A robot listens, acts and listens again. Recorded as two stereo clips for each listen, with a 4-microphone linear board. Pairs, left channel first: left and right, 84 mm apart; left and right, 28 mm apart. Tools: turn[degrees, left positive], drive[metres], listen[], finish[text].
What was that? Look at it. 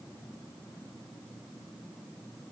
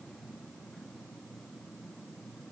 Action: listen[]
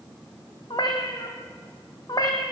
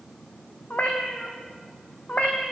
Thought: The cat meowing: about 50° left or 130° left.
Action: turn[50]
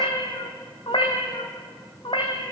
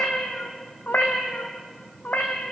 Thought: So it is at 80° left.
Action: turn[80]
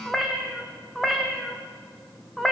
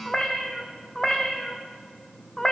Action: finish[Facing the cat meowing, 2 to 4 m away.]